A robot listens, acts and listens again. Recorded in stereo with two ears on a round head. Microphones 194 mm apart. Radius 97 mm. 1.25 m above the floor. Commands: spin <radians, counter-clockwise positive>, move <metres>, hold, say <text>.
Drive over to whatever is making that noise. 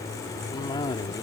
spin 0.35
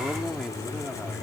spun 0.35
move 1.0
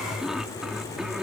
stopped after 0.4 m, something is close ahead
say Blocked. The cough is further on, straight ahead.